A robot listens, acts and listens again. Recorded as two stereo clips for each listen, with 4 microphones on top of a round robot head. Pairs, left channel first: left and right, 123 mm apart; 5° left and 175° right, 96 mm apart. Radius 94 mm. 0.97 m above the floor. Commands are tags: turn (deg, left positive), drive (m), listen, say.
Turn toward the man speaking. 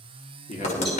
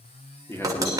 <turn deg="65"/>
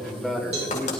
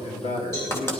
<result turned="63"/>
<say>Facing the man speaking.</say>